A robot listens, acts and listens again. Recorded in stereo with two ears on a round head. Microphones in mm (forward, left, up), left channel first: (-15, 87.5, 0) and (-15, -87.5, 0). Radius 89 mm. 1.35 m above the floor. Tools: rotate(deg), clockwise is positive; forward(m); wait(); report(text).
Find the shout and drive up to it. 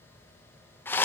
wait()
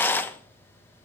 wait()
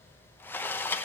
report("I can't make out a shout, only a rattle.")